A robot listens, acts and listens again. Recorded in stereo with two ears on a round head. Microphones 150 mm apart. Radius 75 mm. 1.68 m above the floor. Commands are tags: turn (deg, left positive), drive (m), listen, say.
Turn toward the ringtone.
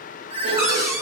<turn deg="-30"/>
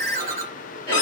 <turn deg="-115"/>
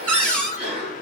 <listen/>
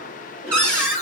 <turn deg="50"/>
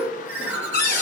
<turn deg="-15"/>
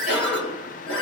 <say>Found it: a ringtone, straight ahead.</say>